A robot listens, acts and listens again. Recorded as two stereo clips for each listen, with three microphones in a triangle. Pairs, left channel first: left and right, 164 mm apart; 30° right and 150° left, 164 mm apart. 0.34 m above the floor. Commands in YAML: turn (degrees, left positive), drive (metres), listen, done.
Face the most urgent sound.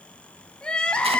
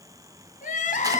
done: "Facing the crying."